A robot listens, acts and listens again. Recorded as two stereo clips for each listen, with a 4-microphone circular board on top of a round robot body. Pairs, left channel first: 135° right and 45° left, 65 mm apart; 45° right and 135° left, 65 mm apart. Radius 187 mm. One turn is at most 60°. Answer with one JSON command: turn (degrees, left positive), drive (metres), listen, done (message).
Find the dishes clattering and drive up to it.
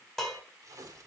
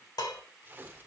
{"turn": -50}
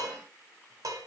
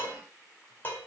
{"turn": 15}
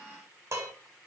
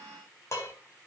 {"drive": 1.0}
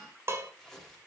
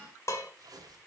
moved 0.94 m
{"drive": 1.0}
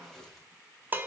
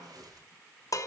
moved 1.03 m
{"turn": -15}
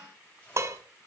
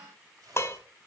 {"drive": 1.0}
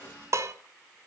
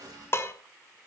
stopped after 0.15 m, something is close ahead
{"done": "Arrived at the dishes clattering, straight ahead."}